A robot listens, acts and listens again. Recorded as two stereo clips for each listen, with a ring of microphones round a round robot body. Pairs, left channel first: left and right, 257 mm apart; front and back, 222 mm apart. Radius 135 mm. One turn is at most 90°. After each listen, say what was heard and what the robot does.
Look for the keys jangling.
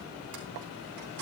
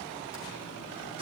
The keys jangling: 110° right. Turn 90° right.
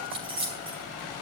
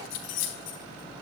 The keys jangling is now 20° right. Turn 20° right.
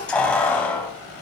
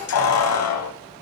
Found it: keys jangling, straight ahead.